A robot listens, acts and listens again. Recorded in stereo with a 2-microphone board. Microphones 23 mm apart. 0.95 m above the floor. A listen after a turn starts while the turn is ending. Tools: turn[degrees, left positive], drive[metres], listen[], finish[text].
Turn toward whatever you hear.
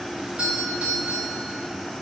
Action: turn[-90]
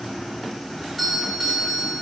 Action: finish[Found it: a doorbell, straight ahead.]